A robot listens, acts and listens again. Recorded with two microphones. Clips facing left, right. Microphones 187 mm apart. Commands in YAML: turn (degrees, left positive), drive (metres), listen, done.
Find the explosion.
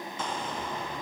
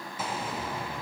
turn: -30
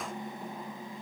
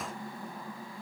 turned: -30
listen: true
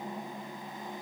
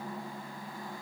done: "I heard an explosion, but can't make it out now. It was about 25° left or 145° right."